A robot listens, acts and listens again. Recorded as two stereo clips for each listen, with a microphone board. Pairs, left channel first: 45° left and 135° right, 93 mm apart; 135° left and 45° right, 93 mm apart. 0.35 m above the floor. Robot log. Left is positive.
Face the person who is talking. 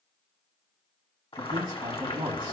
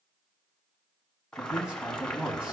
note: The man speaking: 120° right.
cmd yaw -120
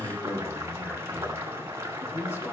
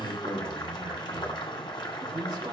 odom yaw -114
note: The man speaking is now 10° right.
cmd yaw -10
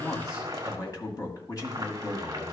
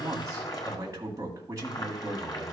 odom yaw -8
end: Facing the man speaking, 1 to 2 m away.